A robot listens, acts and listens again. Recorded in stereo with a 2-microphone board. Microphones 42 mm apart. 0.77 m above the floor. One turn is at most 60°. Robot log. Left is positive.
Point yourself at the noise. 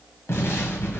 cmd yaw +60
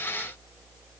note: Nothing new. It was at 30° left.
cmd yaw +30
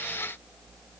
end: I heard an explosion from this way, but can't make it out now.